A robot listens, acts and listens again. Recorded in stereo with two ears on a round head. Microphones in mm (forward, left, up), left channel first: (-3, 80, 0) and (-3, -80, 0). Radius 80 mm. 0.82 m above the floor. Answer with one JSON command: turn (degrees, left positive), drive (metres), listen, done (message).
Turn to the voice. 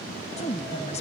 {"turn": 40}
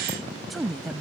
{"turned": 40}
{"done": "Found it: a woman speaking, straight ahead."}